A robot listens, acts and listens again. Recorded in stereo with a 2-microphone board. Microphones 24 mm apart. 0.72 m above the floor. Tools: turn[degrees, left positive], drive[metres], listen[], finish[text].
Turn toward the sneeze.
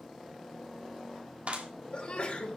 Thought: The sneeze: about 50° left or 130° left.
Action: turn[50]
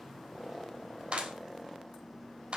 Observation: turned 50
Action: listen[]
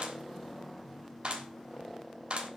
Action: finish[I heard a sneeze, but can't make it out now. It was about straight ahead or 80° left.]